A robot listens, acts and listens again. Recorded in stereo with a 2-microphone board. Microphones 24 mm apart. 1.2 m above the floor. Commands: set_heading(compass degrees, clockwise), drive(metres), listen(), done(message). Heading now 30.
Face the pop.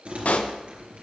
set_heading(320)
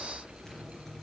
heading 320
listen()
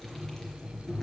done("I heard a pop, but can't make it out now. It was about straight ahead or 40° left.")